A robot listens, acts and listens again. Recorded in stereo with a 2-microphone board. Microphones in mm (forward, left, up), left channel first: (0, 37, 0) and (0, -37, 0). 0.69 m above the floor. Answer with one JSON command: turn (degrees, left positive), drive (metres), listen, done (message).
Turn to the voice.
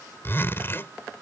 {"listen": true}
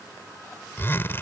{"listen": true}
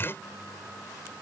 {"done": "I can't make out anyone speaking to turn to."}